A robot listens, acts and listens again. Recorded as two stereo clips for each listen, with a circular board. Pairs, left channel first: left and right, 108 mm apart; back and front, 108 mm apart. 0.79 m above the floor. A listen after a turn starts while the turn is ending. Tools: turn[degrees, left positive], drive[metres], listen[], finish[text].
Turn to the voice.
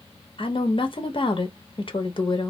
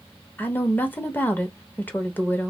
Thought: The woman speaking: 110° left.
Action: turn[110]
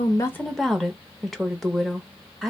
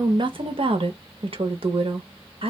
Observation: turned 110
Action: finish[Facing the woman speaking.]